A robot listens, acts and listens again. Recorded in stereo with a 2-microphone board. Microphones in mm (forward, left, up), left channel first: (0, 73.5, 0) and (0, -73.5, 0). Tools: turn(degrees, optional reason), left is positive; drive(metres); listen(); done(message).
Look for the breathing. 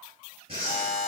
turn(degrees=-40, reason="The breathing: about 40° right or 140° right.")
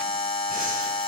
listen()
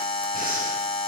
listen()
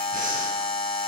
done("I heard breathing, but can't make it out now. It was about straight ahead or 100° right.")